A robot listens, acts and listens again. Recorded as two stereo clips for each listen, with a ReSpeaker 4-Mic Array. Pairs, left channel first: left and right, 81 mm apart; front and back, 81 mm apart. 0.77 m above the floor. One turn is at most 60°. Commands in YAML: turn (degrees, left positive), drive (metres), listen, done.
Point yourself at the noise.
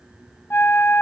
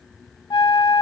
turn: 25
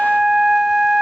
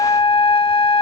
done: "Facing the flute."